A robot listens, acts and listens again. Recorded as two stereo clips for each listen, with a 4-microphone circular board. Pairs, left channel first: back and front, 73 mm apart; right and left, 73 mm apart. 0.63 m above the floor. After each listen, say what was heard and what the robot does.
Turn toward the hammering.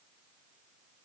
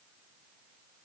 Keep listening.
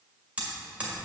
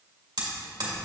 The hammering: 70° left. Turn 70° left.
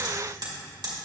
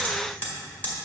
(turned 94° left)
The hammering is now 25° right. Turn 25° right.
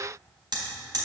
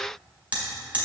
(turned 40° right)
The hammering is now 20° left. Turn 20° left.
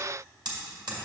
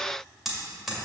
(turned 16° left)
Facing the hammering, 2 to 4 m away.